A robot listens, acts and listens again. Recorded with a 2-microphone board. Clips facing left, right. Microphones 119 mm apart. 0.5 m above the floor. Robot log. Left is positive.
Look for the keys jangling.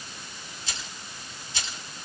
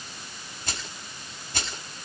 note: The keys jangling: about 55° right or 125° right.
cmd yaw -55
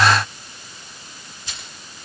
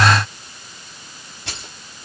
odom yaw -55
note: So it is at 70° right.
cmd yaw -70
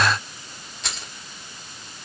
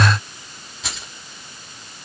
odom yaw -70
end: Facing the keys jangling.